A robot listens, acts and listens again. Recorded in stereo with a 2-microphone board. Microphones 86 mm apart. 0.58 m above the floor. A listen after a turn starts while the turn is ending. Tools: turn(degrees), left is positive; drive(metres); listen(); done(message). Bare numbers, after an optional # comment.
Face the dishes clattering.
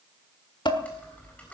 # The dishes clattering: about 65° left or 115° left.
turn(65)
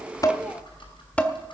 # So it is at 15° left.
turn(15)
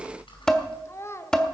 # The dishes clattering is now 10° left.
turn(10)
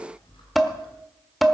done("Found it: dishes clattering, straight ahead.")